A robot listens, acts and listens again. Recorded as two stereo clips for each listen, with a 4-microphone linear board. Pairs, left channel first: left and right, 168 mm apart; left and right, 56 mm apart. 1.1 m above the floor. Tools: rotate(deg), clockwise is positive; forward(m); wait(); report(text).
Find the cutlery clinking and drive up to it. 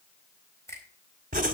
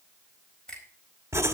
wait()
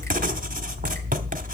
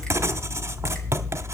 wait()
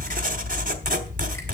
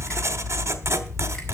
report("I can't make out cutlery clinking to turn to.")